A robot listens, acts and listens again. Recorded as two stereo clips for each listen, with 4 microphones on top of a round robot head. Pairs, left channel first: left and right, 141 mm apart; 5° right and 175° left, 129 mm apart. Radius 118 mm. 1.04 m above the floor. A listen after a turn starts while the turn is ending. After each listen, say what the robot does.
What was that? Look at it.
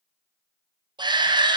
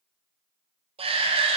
Turn 145° right.
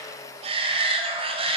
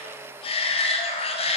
Turn 45° right.
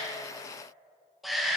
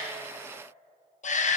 Facing the shout, under 1 m away.